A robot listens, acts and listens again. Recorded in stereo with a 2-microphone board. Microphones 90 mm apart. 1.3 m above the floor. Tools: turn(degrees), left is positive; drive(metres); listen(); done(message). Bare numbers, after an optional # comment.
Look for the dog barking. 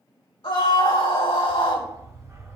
# The dog barking: about 35° right or 145° right.
turn(-35)
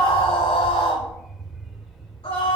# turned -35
done("Facing the dog barking.")